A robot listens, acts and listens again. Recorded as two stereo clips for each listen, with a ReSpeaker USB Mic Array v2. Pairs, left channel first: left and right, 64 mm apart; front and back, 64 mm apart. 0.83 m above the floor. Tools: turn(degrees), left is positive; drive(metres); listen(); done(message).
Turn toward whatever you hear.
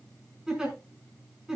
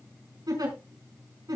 turn(degrees=-170)
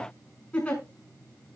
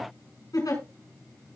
turn(degrees=20)
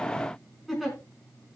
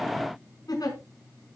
done("Facing the giggle, over 4 m away.")